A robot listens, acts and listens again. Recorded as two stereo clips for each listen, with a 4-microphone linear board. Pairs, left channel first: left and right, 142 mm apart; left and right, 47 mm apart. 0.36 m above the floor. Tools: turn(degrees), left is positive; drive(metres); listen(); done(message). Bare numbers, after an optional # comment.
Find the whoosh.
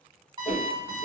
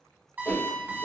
# The whoosh: about 65° left or 115° left.
turn(65)
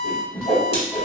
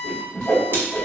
# So it is at 45° left.
turn(45)
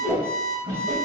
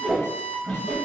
# The whoosh is now 15° left.
turn(15)
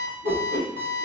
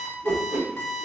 done("Facing the whoosh.")